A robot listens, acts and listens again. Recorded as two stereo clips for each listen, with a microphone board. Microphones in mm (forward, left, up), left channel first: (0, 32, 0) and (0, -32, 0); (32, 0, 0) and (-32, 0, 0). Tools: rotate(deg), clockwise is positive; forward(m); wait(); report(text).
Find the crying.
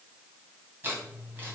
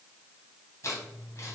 wait()
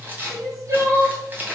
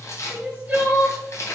rotate(115)
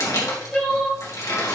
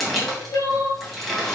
rotate(-10)
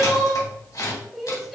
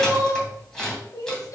report("Found it: crying, straight ahead.")